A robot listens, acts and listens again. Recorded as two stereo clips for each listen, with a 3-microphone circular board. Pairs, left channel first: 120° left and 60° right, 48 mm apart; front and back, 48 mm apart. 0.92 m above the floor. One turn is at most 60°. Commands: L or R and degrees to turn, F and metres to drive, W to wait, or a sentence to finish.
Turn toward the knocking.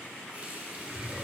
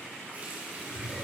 W
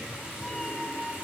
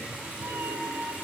W
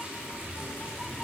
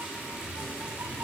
I can't make out knocking, only a cat meowing.